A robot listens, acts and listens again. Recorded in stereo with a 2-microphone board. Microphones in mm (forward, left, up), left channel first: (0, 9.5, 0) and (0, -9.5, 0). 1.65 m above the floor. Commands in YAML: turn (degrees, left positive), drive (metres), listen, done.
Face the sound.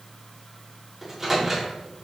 turn: -30
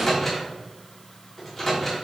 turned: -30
turn: 15
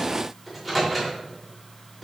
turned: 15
done: "Facing the microwave."